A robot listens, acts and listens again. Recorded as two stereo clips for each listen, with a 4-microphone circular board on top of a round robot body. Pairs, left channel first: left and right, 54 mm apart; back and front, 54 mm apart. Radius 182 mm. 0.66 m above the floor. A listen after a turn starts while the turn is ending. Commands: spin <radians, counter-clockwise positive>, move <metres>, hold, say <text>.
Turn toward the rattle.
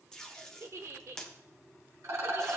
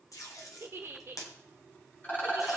spin -2.18
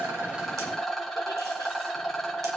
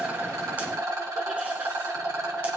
say Facing the rattle, 2 to 4 m away.